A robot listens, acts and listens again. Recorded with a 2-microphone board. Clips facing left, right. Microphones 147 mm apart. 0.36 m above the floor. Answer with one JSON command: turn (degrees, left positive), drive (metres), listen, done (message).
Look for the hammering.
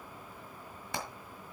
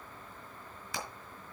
{"turn": 60}
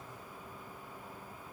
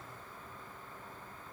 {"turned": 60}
{"listen": true}
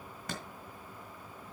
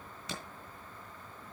{"turn": 55}
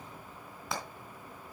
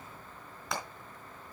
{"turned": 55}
{"done": "Found it: hammering, straight ahead, 2 to 4 m away."}